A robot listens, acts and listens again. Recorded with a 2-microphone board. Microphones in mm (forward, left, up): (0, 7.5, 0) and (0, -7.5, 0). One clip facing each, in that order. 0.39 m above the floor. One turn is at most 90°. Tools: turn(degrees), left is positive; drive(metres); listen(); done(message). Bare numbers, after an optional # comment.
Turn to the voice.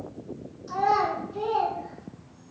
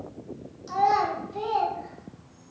# The child speaking: about 55° right or 125° right.
turn(-55)
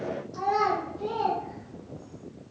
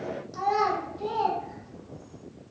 # So it is at 55° right.
turn(-55)
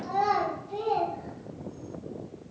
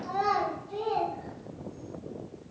done("Facing the child speaking.")